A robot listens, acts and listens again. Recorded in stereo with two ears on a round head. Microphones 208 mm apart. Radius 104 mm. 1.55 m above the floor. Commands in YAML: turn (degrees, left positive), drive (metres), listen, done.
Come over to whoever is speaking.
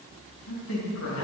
turn: 65
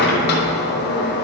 listen: true
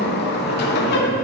listen: true
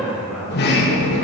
drive: 1.0
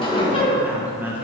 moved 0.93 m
turn: -10
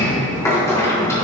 listen: true
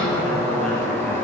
listen: true
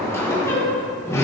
done: "I heard a man speaking from this way, but can't make it out now. I did not reach it."